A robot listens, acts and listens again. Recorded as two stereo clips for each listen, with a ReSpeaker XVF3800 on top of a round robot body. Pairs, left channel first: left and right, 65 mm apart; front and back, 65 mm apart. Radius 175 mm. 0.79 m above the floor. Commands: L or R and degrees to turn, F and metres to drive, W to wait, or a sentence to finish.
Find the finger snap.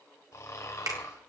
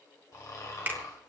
R120
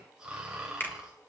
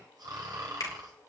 L30
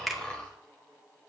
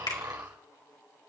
Facing the finger snap.